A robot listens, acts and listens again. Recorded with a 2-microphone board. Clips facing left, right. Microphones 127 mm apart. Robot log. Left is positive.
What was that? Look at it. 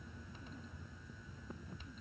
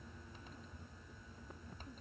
cmd idle
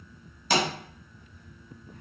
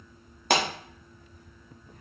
note: The pop: about 60° right or 120° right.
cmd yaw -60
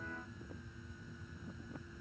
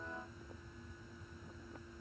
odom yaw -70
cmd idle
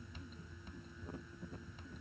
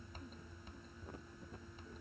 end: I heard a pop, but can't make it out now. It was about 10° left or 50° right.